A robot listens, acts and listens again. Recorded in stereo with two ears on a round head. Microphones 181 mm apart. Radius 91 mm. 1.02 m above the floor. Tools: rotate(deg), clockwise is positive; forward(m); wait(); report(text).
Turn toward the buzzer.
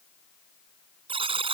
rotate(25)
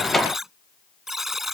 report("Facing the buzzer.")